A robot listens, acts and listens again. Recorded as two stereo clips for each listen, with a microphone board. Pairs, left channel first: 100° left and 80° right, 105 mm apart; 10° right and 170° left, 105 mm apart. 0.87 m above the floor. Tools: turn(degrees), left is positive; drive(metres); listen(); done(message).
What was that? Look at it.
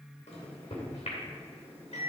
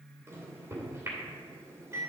turn(degrees=105)
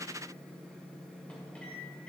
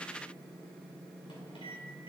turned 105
turn(degrees=25)
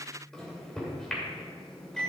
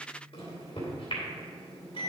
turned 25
turn(degrees=15)
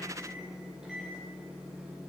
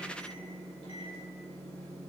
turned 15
done("Facing the microwave, 2 to 4 m away.")